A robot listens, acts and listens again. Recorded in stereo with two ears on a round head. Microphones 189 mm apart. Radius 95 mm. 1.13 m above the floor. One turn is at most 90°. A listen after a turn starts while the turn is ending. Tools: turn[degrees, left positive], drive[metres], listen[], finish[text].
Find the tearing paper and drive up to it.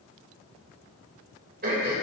Action: listen[]
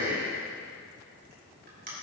Action: listen[]
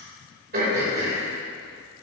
Action: finish[I can't make out tearing paper to turn to.]